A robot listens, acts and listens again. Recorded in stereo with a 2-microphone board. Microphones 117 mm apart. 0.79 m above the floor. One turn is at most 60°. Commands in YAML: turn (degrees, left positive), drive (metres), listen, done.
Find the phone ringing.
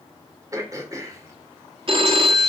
turn: -50
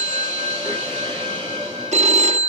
turn: -60
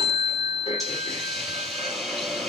turn: -35
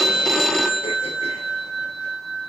done: "Facing the phone ringing, under 1 m away."